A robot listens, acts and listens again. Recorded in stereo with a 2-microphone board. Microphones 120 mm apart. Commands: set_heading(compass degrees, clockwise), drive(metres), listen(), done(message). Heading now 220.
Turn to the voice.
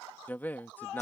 set_heading(190)
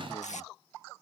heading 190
listen()
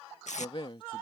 set_heading(55)
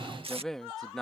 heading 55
done("Found it: a man speaking, straight ahead.")